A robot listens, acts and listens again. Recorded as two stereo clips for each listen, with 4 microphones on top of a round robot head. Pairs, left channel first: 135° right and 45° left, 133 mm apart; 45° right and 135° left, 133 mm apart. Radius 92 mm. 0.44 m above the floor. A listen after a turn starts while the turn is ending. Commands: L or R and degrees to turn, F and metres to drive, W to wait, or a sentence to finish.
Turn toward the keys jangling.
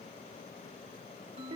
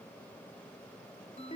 W
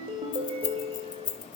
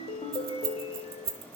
L170
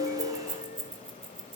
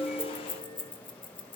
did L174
Found it: keys jangling, straight ahead.